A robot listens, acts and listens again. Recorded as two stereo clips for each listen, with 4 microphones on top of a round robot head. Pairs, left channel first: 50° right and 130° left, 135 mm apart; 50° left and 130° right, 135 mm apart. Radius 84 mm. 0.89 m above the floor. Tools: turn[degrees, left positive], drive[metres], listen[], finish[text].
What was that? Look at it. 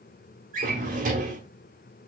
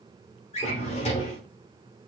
Thought: The drawer: 100° left.
Action: turn[100]
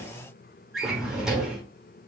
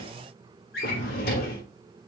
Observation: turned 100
Thought: The drawer is now 40° left.
Action: turn[40]
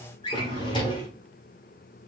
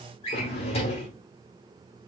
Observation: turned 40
Action: finish[Facing the drawer, 1 to 2 m away.]